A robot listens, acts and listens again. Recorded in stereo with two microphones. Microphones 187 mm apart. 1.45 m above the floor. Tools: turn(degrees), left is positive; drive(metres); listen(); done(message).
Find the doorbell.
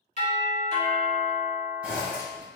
turn(degrees=-35)
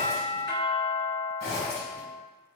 turn(degrees=-110)
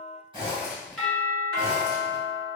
done("Facing the doorbell, 1 to 2 m away.")